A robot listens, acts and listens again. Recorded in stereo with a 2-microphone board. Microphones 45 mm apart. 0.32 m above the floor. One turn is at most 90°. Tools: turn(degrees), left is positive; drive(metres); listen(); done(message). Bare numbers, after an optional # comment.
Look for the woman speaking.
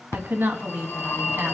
# The woman speaking: about 50° right or 130° right.
turn(-50)
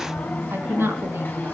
# So it is at 70° right.
turn(-70)
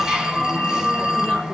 listen()
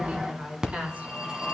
# The woman speaking is now 35° right.
turn(-35)
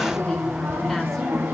listen()
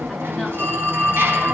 listen()
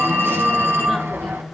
# The woman speaking is now 10° left.
turn(10)
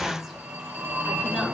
done("Found it: a woman speaking, straight ahead.")